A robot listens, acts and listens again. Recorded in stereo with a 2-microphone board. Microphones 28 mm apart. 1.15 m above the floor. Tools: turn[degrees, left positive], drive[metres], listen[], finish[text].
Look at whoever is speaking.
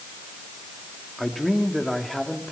Action: turn[30]
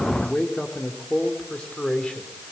Thought: So it is at 145° left.
Action: turn[145]
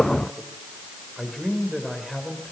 Action: finish[Found it: a man speaking, straight ahead, over 4 m away.]